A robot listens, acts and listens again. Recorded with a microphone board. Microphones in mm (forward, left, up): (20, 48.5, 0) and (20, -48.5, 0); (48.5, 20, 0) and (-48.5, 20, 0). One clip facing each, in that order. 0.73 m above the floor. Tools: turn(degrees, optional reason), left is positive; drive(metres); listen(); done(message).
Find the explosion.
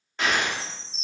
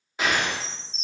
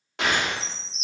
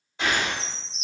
turn(degrees=-10, reason="The explosion: 10° right.")
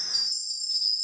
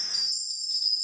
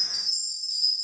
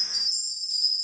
done("I heard an explosion from this way, but can't make it out now.")